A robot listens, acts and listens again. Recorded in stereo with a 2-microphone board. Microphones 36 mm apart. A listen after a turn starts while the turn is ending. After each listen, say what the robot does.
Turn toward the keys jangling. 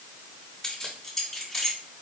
Turn 30° left.
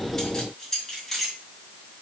Turn 30° left.
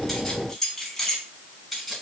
Turn 30° left.
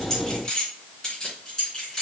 Turn 160° left.
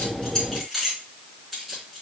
Facing the keys jangling, 2 to 4 m away.